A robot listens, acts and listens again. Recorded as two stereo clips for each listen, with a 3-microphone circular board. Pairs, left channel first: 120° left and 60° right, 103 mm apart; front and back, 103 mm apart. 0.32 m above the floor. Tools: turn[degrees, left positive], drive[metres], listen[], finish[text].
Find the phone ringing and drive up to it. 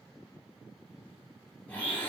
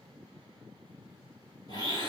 Action: listen[]
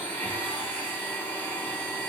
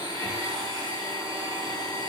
Action: listen[]
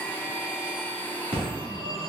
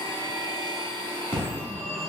Thought: The phone ringing: 65° right.
Action: turn[-65]
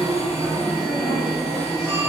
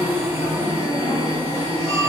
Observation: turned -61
Action: drive[1.0]
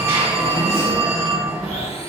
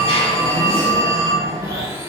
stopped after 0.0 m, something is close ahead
Action: finish[Blocked. The phone ringing is further on, straight ahead.]